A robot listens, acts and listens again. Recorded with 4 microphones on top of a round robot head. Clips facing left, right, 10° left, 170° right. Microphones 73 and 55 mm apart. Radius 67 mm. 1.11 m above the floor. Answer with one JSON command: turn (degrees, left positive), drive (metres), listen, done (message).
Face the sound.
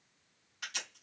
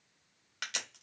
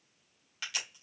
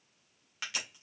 {"turn": -100}
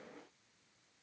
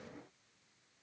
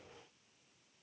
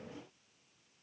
{"done": "I heard a crack from this way, but can't make it out now."}